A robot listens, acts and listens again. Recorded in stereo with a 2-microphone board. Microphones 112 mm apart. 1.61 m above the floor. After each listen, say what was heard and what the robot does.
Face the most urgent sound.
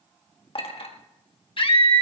The scream: about 50° left or 130° left. Turn 50° left.
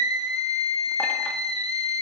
So it is at 75° left. Turn 75° left.
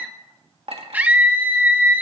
The scream is now 15° right. Turn 15° right.
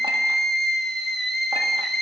Found it: a scream, straight ahead, 1 to 2 m away.